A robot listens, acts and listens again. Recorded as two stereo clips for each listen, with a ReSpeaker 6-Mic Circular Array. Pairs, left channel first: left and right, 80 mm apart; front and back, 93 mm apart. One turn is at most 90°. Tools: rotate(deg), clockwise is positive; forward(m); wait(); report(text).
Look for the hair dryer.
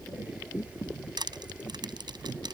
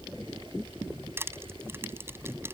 wait()
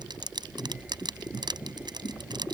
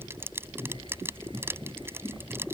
wait()
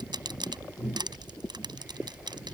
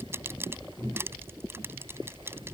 report("I can't make out a hair dryer, only crushing.")